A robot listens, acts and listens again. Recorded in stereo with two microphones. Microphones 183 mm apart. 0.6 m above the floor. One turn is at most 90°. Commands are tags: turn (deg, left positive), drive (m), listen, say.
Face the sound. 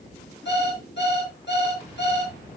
<turn deg="70"/>
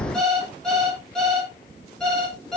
<say>Facing the alarm clock.</say>